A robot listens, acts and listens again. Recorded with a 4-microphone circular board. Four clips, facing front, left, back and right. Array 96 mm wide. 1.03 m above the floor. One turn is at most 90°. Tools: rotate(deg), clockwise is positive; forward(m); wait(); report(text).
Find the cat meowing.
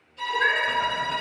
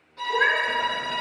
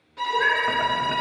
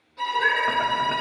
rotate(-90)
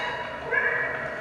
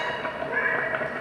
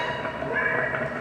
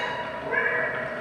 report("Found it: a cat meowing, straight ahead.")